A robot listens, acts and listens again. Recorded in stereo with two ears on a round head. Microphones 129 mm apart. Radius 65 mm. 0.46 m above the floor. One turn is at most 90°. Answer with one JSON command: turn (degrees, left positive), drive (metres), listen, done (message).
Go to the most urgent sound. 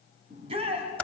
{"turn": -40}
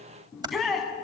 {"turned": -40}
{"drive": 1.0}
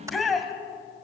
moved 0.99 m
{"drive": 1.0}
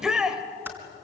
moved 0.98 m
{"drive": 1.0}
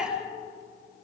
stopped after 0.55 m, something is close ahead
{"turn": -10}
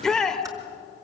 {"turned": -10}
{"done": "Arrived at the shout, straight ahead."}